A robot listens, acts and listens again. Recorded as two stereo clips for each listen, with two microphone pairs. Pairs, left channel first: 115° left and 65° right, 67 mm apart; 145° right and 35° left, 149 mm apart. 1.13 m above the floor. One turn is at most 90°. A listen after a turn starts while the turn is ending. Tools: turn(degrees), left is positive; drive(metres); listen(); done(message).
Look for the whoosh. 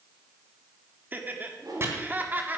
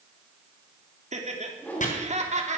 turn(degrees=-65)
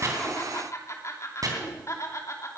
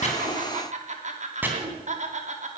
listen()
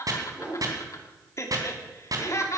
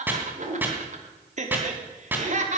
turn(degrees=10)
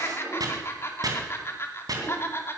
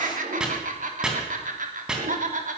listen()
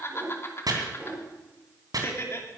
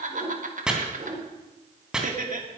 done("Found it: a whoosh, straight ahead.")